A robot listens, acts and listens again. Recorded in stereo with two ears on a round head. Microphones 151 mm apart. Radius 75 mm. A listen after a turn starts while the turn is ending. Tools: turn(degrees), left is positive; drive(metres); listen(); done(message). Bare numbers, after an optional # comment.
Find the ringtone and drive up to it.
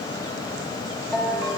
turn(-30)
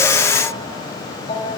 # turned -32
# So it is at 25° left.
turn(25)
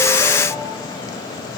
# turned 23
listen()
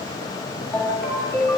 drive(1.0)
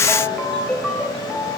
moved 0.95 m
drive(1.0)
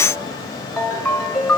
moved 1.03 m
drive(1.0)
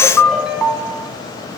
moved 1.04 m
drive(1.0)
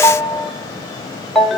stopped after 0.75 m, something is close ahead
done("I am next to the ringtone.")